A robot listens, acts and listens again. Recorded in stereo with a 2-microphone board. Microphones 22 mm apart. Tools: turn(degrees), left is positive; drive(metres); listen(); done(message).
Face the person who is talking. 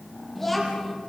turn(degrees=30)
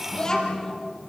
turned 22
turn(degrees=150)
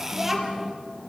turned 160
turn(degrees=-15)
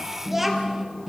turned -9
turn(degrees=-10)
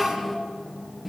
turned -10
done("Found it: a child speaking, straight ahead, 2 to 4 m away.")